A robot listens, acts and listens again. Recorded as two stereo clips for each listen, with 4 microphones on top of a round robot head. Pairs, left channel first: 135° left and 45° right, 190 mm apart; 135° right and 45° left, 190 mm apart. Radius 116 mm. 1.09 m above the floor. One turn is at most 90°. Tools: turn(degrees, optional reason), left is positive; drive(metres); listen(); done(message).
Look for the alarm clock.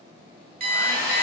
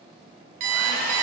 turn(degrees=15, reason="The alarm clock: 15° left.")
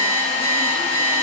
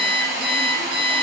done("Facing the alarm clock.")